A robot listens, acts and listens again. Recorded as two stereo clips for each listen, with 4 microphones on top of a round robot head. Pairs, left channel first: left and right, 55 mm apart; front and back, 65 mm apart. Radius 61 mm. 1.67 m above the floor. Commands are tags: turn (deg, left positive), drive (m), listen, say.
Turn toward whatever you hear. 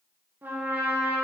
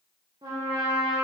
<turn deg="-145"/>
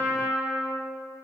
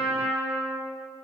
<say>Found it: a trumpet, straight ahead.</say>